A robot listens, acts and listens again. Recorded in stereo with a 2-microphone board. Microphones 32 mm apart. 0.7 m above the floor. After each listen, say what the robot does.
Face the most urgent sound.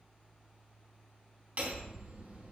Keep listening.
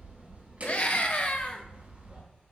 Turn 50° left.
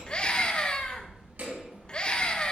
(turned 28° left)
Turn 35° left.
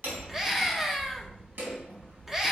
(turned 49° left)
Turn 15° right.
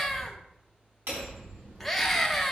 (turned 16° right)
Facing the scream.